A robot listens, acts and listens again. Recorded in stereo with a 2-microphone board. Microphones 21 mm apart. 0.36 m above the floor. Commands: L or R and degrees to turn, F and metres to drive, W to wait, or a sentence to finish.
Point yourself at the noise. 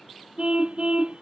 R70
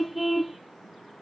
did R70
Found it: a car horn, straight ahead.